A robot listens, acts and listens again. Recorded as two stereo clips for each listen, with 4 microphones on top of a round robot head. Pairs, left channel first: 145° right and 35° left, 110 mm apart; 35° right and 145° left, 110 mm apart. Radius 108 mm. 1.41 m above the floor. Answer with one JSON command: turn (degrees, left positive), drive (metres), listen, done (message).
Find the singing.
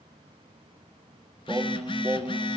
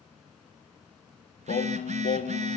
{"turn": -40}
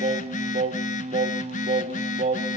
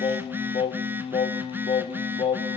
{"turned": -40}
{"turn": 10}
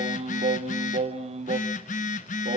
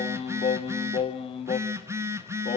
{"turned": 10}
{"done": "Facing the singing, 1 to 2 m away."}